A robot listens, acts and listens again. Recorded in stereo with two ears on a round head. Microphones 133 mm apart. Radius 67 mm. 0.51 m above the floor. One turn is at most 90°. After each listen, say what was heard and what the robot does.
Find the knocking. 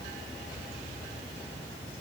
Keep listening.
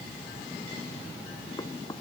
The knocking: about 25° left or 155° left. Turn 25° left.
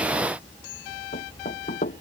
So it is at 130° left. Turn 90° left.
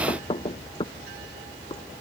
The knocking is now 30° left. Turn 30° left.
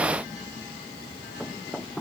Facing the knocking.